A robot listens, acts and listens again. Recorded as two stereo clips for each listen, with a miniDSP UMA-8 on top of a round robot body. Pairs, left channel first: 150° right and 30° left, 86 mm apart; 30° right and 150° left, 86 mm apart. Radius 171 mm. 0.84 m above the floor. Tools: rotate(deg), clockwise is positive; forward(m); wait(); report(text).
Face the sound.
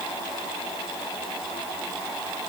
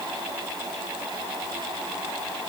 wait()
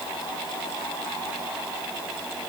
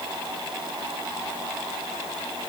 wait()
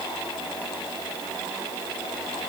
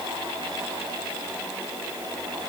report("I can't make out anything to turn to.")